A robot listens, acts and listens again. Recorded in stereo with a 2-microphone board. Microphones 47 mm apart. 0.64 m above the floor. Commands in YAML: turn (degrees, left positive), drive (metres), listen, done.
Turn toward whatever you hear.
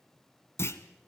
turn: 65
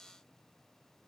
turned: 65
listen: true
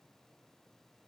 done: "I heard a clunk, but can't make it out now. It was about straight ahead or 50° left."